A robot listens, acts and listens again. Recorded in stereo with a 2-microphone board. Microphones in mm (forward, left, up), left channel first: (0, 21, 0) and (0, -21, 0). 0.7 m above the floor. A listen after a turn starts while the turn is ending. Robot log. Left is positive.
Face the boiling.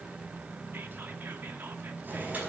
note: The boiling: about 45° right or 135° right.
cmd yaw -45
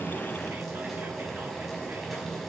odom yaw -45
end: Facing the boiling.